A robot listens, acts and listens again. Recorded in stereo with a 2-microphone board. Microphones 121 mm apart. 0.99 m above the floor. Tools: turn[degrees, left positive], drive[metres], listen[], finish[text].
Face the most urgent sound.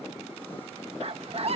Thought: The scream: about 60° right or 120° right.
Action: turn[-60]
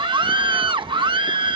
Thought: So it is at 50° right.
Action: turn[-50]
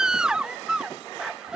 Action: finish[Found it: a scream, straight ahead.]